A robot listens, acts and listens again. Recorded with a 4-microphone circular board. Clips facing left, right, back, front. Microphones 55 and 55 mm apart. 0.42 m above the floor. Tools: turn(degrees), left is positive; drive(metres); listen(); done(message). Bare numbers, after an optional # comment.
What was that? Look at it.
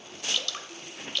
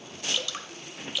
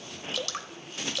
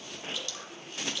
# The dripping: 170° right.
turn(-170)
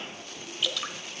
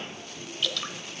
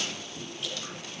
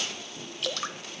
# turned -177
done("Facing the dripping, under 1 m away.")